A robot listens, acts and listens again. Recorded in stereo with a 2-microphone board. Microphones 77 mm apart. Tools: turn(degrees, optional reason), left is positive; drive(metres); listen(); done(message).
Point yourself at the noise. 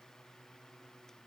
listen()
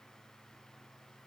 listen()
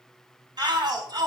turn(degrees=-60, reason="The shout: about 60° right or 120° right.")
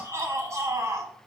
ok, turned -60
turn(degrees=-40, reason="So it is at 40° right.")
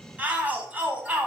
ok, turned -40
turn(degrees=-20, reason="The shout is now 20° right.")
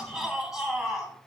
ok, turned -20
done("Facing the shout, 1 to 2 m away.")